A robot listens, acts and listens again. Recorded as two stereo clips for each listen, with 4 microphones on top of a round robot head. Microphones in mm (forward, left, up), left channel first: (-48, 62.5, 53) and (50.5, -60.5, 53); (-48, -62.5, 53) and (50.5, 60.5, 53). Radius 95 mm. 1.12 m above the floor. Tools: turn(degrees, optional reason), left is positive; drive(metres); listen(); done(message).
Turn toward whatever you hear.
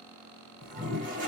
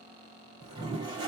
turn(degrees=-15, reason="The toilet flushing: 15° right.")
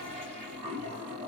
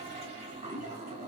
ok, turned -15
done("Found it: a toilet flushing, straight ahead.")